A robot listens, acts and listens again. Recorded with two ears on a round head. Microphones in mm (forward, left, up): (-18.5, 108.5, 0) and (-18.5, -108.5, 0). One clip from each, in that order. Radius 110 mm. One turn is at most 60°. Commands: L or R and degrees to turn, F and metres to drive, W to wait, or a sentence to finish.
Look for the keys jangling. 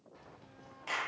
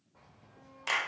L60
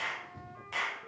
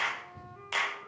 Found it: keys jangling, straight ahead, 1 to 2 m away.